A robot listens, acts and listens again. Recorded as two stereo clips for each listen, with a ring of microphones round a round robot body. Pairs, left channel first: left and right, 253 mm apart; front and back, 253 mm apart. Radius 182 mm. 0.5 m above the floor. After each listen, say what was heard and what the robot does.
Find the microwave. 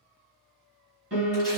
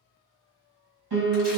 Keep listening.
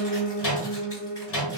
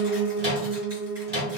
The microwave: 130° left. Turn 130° left.
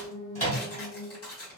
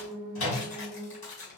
The microwave is now 25° left. Turn 25° left.
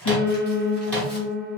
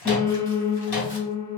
Found it: a microwave, straight ahead, 1 to 2 m away.